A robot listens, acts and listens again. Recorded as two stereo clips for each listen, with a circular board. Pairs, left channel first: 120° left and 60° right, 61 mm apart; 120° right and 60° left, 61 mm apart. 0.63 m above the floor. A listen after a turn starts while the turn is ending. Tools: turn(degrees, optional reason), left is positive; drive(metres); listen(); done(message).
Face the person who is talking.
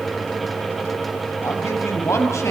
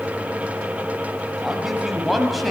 turn(degrees=150, reason="The man speaking: 150° left.")
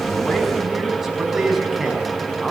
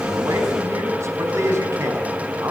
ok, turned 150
turn(degrees=25, reason="The man speaking is now 25° left.")
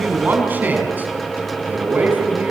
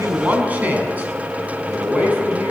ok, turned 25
done("Facing the man speaking, over 4 m away.")